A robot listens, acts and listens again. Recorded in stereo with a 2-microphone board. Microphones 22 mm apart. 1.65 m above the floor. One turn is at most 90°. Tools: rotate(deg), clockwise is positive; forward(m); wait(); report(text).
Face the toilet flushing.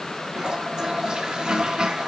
rotate(40)
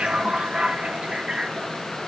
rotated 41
rotate(90)
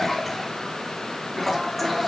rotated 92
report("Found it: a toilet flushing, straight ahead, 1 to 2 m away.")